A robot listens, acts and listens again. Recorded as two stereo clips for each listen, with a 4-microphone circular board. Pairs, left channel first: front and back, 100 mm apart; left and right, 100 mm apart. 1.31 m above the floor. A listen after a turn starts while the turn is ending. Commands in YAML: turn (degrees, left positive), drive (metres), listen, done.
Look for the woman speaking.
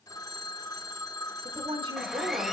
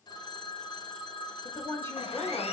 turn: 155
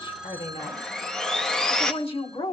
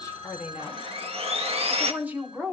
turn: -15
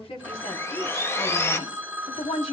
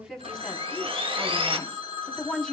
done: "Facing the woman speaking."